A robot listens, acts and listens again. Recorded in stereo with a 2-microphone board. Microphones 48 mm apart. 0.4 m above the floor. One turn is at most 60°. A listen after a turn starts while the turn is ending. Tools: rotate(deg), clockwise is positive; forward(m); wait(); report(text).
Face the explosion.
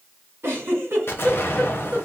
rotate(-60)
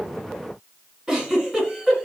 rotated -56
wait()
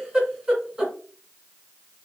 report("I heard an explosion, but can't make it out now. It was about straight ahead or 65° left.")